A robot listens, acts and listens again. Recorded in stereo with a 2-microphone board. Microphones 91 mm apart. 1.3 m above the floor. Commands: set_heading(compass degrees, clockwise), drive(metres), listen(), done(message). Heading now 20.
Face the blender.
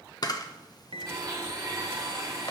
set_heading(60)
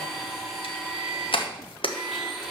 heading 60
done("Facing the blender.")